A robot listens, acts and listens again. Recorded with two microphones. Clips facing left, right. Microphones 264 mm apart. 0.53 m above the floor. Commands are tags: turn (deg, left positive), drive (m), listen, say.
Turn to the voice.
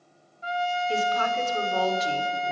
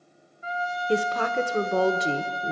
<turn deg="-55"/>
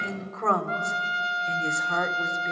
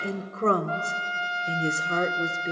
<turn deg="-40"/>
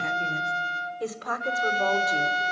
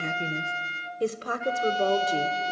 <turn deg="-35"/>
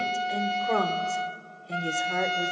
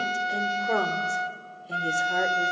<say>Found it: a woman speaking, straight ahead.</say>